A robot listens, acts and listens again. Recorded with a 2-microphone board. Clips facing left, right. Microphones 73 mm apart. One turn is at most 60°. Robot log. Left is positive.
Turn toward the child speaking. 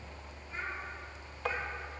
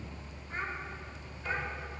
note: The child speaking: about 40° right or 140° right.
cmd yaw -40
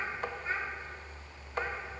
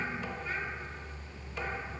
note: So it is at 30° left.
cmd yaw +30
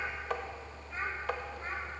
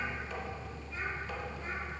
note: The child speaking is now 40° left.
cmd yaw +40
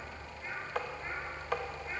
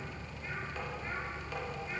note: The child speaking is now 25° left.
cmd yaw +25
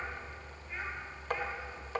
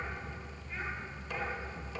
cmd idle
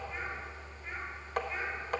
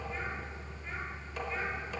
cmd idle
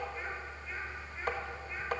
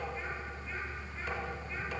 end: I heard a child speaking from this way, but can't make it out now.